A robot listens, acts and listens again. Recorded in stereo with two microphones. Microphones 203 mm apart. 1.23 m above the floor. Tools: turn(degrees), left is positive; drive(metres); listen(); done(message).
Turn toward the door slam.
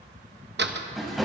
turn(degrees=-60)
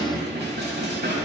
listen()
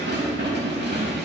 done("I heard a door slam, but can't make it out now. It was about straight ahead or 60° right.")